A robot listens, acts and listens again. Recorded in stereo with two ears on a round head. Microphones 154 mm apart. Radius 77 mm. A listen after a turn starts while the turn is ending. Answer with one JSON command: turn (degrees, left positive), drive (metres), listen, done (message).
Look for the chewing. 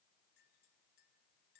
{"listen": true}
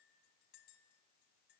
{"listen": true}
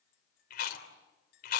{"turn": 60}
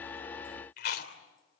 {"turn": 60}
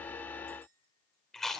{"done": "Facing the chewing, 2 to 4 m away."}